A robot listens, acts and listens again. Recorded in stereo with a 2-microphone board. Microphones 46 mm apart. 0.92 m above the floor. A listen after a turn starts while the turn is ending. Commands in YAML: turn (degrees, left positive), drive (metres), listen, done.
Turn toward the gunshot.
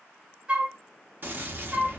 turn: -45
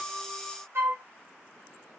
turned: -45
listen: true
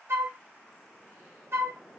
done: "I heard a gunshot, but can't make it out now. It was about straight ahead or 90° right."